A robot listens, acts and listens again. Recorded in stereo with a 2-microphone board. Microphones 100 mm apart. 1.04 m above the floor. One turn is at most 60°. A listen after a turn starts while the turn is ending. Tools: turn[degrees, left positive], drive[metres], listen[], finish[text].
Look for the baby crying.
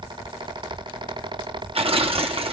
Action: listen[]
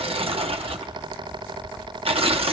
Action: listen[]
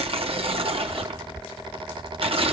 Action: finish[I can't make out a baby crying, only tearing paper.]